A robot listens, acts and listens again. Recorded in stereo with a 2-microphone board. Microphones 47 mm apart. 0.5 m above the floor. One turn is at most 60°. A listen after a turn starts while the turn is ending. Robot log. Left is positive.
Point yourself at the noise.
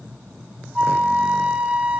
note: The flute: about 30° right or 150° right.
cmd yaw -30
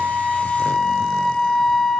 end: Facing the flute, 1 to 2 m away.